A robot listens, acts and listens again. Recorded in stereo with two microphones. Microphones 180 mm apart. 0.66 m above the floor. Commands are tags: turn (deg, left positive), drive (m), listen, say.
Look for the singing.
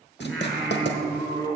<turn deg="20"/>
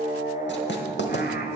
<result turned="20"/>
<turn deg="115"/>
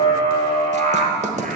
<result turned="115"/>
<turn deg="-50"/>
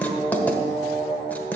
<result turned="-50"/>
<turn deg="-10"/>
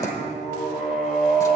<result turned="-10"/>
<say>Found it: singing, straight ahead, 2 to 4 m away.</say>